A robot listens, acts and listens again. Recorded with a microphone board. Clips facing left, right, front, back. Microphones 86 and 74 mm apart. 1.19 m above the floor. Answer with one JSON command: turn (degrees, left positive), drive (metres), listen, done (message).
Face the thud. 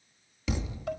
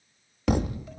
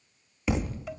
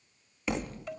{"turn": -90}
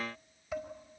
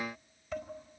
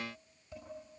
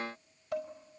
{"done": "I heard a thud from this way, but can't make it out now."}